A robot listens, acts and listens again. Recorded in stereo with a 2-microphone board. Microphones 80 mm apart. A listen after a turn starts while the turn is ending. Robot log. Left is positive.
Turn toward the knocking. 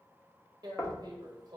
note: The knocking: about 35° left or 145° left.
cmd yaw +35
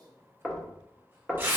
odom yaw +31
end: Facing the knocking, under 1 m away.